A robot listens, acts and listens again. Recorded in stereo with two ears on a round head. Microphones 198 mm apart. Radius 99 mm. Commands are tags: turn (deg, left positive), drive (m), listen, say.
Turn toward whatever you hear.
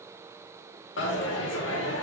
<turn deg="55"/>
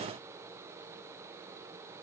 <listen/>
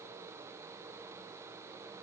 <say>I heard a dropped coin, but can't make it out now. It was about straight ahead or 70° left.</say>